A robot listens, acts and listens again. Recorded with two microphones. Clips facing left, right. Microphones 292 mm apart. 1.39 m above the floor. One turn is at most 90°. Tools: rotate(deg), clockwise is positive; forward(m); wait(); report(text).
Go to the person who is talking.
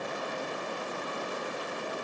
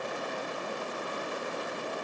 wait()
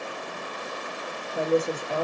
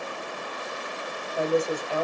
rotate(-60)
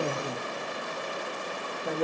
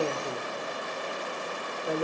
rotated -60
rotate(-60)
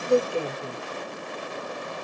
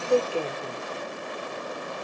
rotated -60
rotate(-20)
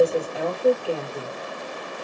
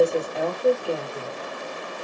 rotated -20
forward(1.0)
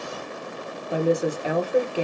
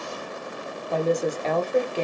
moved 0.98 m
rotate(-10)
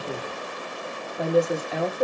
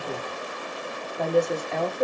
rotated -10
forward(1.0)
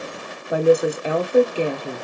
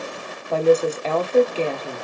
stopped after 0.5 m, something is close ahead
rotate(-15)
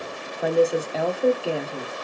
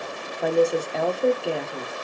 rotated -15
report("I am next to the woman speaking.")